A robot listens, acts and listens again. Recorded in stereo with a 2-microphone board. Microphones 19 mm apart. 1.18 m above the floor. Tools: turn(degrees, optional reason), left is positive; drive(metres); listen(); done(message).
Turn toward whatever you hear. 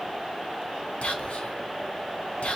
turn(degrees=90)
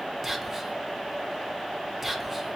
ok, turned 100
turn(degrees=-10, reason="So it is at 10° right.")
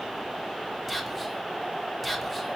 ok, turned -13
done("Facing the whispering, 1 to 2 m away.")